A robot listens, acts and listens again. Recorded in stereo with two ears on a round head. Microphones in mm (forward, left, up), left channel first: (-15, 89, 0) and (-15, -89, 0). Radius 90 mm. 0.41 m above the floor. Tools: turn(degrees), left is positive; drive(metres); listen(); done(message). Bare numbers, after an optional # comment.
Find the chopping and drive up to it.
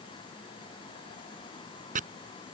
# The chopping: about 45° right or 135° right.
turn(-45)
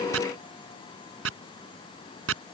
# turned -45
# So it is at 90° right.
turn(-90)
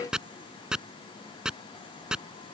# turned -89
drive(1.0)
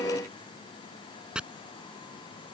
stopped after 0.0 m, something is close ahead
done("Blocked. The chopping is further on, straight ahead.")